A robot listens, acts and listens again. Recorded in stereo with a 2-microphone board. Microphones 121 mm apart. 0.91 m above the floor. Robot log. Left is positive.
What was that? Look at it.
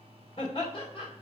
note: The laughter: about 50° left or 130° left.
cmd yaw +50
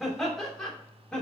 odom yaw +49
note: So it is at 10° left.
cmd yaw +10
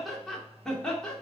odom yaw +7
note: The laughter is now 10° left.
cmd yaw +10
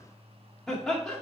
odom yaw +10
end: Facing the laughter, 2 to 4 m away.